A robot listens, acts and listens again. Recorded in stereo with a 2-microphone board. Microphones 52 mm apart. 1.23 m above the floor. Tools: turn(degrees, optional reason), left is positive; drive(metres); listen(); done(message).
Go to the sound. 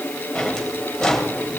turn(degrees=30)
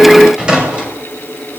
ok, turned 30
turn(degrees=-20, reason="So it is at 20° right.")
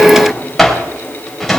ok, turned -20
drive(metres=1.0)
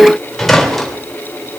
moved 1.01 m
drive(metres=1.0)
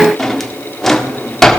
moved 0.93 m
drive(metres=1.0)
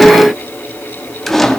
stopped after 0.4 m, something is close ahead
done("Arrived at the drawer, straight ahead.")